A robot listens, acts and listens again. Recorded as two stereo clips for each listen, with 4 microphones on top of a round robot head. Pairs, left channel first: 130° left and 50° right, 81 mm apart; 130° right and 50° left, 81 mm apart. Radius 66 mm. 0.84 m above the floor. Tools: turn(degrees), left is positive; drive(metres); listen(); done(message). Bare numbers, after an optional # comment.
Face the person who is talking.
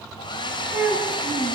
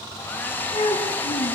# The child speaking: 115° right.
turn(-115)
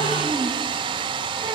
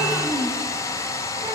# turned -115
listen()
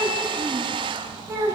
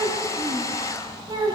done("Facing the child speaking.")